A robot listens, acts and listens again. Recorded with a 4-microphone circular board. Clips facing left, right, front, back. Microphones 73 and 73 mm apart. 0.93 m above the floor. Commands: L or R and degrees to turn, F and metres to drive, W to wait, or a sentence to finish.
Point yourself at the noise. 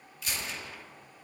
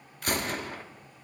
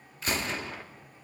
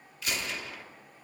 R50
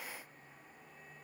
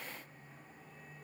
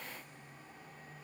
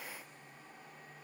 Facing where the gunshot came from. I can't hear it now.